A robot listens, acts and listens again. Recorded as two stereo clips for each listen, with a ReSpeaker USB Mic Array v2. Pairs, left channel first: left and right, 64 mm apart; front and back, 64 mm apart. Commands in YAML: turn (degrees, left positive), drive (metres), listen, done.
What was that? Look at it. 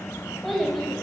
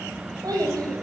turn: 180
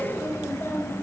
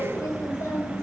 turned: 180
turn: 35
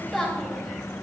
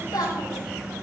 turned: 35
done: "Found it: a child speaking, straight ahead, 2 to 4 m away."